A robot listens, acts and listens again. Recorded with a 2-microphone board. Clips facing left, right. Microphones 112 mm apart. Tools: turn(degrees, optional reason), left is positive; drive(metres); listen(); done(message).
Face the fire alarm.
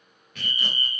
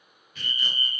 turn(degrees=30)
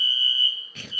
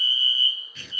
turn(degrees=-25, reason="So it is at 25° right.")
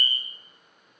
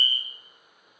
done("Found it: a fire alarm, straight ahead.")